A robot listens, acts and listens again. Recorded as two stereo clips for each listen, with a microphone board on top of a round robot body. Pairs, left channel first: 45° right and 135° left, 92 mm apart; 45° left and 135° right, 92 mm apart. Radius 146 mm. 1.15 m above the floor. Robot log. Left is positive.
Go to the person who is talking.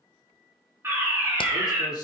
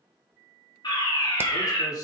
cmd fwd 1.0
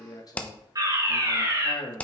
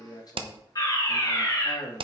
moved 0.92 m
cmd fwd 1.0
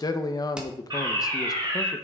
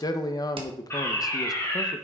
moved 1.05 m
cmd fwd 1.0
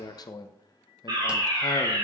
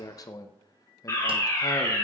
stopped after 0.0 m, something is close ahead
end: Arrived at the man speaking, straight ahead.